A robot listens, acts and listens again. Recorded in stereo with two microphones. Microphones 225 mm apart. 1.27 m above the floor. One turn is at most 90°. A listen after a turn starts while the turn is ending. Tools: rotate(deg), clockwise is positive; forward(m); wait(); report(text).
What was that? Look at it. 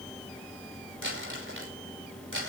rotate(65)
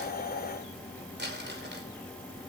rotate(50)
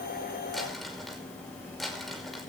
report("Found it: crumpling, straight ahead, over 4 m away.")